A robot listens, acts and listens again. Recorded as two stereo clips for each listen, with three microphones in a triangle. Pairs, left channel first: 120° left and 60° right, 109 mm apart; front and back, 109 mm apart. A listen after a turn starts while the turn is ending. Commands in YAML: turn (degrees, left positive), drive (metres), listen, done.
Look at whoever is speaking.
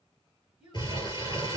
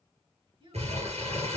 turn: -145
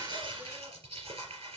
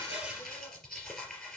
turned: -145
listen: true
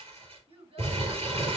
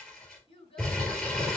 turn: -35
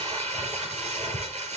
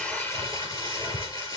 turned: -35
listen: true
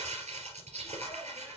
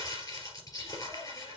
listen: true
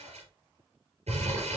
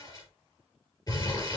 done: "I heard a child speaking from this way, but can't make it out now."